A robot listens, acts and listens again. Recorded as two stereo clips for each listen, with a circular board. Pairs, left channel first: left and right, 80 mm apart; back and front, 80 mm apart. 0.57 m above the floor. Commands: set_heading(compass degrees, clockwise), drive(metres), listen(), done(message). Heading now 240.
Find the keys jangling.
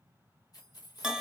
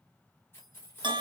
set_heading(120)
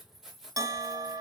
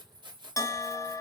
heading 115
done("Found it: keys jangling, straight ahead, 1 to 2 m away.")